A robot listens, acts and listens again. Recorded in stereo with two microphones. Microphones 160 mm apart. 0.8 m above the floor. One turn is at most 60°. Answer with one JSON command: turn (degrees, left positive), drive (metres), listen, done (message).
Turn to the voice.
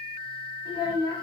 {"turn": 25}
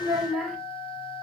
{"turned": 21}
{"done": "Facing the child speaking."}